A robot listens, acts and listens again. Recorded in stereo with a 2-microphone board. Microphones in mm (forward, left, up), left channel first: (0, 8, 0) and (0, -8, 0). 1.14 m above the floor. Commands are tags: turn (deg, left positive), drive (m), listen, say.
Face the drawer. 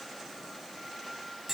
<listen/>
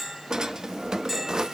<turn deg="-55"/>
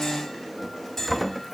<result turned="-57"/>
<say>Facing the drawer.</say>